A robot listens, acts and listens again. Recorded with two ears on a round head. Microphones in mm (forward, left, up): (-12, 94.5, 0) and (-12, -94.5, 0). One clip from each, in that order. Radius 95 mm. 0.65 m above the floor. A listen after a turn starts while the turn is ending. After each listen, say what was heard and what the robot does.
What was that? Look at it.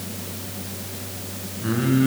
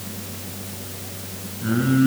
The singing: about 25° left or 155° left. Turn 25° left.
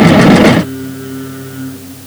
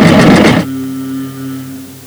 Found it: singing, straight ahead, over 4 m away.